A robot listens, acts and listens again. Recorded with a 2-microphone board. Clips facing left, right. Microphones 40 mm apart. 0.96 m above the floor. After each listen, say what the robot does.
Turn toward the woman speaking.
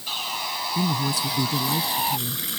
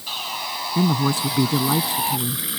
Turn 45° right.
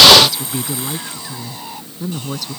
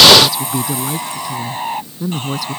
Facing the woman speaking.